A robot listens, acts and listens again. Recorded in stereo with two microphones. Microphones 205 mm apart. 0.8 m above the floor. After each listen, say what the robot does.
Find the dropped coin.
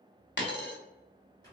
Turn 65° left.
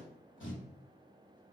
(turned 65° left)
Keep listening.
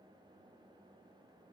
I heard a dropped coin, but can't make it out now. It was about straight ahead or 50° left.